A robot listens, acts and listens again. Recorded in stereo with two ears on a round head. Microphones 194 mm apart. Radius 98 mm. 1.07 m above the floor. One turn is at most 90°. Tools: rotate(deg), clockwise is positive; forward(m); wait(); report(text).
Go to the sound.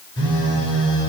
rotate(-90)
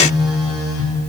forward(1.0)
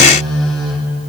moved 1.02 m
forward(1.0)
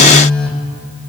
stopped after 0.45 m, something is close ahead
report("I am next to the phone buzzing.")